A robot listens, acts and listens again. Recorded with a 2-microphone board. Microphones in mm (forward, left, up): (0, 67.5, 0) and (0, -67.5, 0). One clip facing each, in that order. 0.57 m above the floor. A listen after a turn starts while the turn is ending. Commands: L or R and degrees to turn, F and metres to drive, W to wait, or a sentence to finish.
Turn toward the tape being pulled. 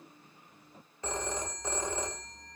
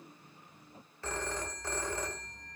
W
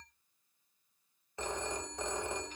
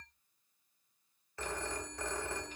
W
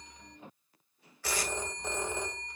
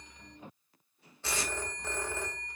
R25
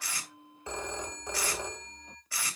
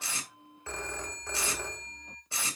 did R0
R25
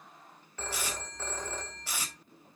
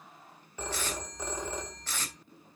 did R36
L10
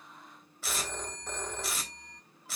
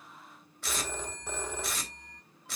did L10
Facing the tape being pulled, 2 to 4 m away.